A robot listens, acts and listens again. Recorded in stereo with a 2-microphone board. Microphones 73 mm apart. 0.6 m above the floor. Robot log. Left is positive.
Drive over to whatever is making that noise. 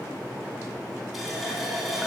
cmd yaw +30
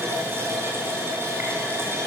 note: So it is at 35° right.
cmd yaw -35
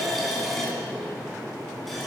cmd fwd 1.0
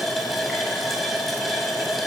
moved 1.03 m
cmd fwd 1.0
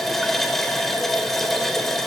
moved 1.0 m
cmd fwd 1.0
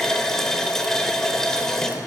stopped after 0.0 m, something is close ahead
end: I am next to the running tap.